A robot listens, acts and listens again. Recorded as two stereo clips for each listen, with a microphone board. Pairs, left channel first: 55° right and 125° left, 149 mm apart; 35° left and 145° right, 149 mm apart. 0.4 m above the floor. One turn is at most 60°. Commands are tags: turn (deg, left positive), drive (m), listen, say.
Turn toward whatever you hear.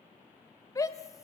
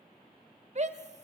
<turn deg="-60"/>
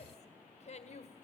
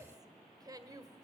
<turn deg="-60"/>
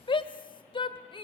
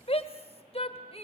<say>Facing the shout, 1 to 2 m away.</say>